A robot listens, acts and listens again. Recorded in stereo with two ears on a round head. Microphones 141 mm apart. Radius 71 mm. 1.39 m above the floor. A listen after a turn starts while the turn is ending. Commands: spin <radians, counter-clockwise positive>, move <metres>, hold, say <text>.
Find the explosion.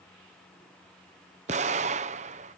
spin -0.79
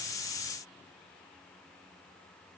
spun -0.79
hold
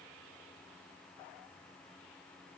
say I heard an explosion, but can't make it out now. It was about straight ahead or 90° right.